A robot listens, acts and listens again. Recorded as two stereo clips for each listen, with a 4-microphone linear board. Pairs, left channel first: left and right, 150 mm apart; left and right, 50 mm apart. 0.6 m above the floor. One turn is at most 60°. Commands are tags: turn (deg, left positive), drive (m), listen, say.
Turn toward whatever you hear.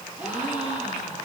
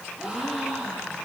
<turn deg="-30"/>
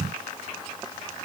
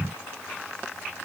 <listen/>
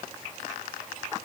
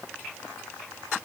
<say>I heard a gasp, but can't make it out now. It was about 20° left or 140° right.</say>